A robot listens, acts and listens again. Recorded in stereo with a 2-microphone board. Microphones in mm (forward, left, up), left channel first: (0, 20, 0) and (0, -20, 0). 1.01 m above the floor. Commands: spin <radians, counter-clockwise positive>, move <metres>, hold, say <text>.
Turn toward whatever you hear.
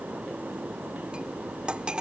spin -0.44
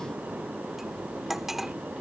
say Facing the cutlery clinking.